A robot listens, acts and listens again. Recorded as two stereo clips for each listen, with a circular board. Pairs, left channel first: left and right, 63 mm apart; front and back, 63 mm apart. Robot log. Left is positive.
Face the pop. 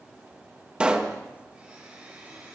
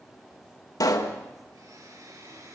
note: The pop: 15° right.
cmd yaw -15
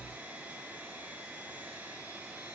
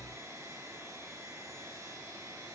end: I heard a pop from this way, but can't make it out now.